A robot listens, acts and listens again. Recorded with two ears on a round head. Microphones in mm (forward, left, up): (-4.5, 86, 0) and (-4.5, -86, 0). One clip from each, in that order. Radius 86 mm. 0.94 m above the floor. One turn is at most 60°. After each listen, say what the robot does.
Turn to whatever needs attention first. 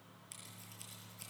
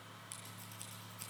Keep listening.
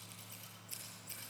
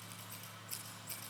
Keep listening.
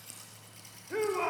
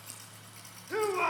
Turn 35° right.
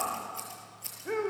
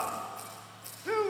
Turn 60° right.
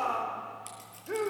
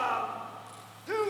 Turn 50° right.
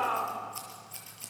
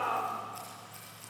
Turn 10° left.
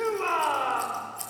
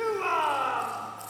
Found it: a shout, straight ahead.